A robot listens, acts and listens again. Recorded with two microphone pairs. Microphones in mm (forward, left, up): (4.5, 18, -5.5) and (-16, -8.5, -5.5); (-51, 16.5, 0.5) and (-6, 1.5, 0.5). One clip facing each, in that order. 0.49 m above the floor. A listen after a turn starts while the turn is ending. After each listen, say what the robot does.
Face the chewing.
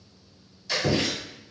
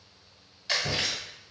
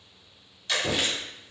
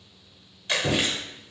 Turn 85° right.
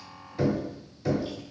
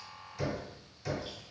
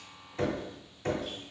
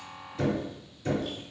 Keep listening.
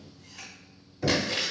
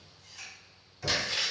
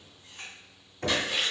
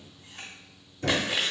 Turn 15° right.
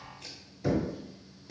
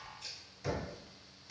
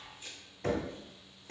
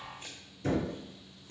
Keep listening.
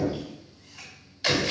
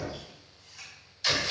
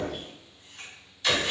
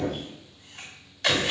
Facing the chewing, 1 to 2 m away.